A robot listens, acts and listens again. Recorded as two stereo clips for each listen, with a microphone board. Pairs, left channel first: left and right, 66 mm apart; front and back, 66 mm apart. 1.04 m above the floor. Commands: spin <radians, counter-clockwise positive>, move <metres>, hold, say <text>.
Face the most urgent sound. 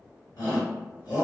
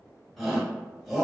spin 1.57
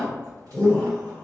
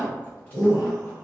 spin 0.17
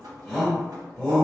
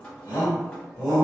say Found it: a shout, straight ahead, 1 to 2 m away.